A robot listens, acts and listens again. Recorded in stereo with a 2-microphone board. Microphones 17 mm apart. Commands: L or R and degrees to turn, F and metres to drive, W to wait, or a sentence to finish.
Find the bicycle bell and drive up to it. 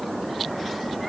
W
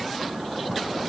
W
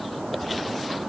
I can't make out a bicycle bell.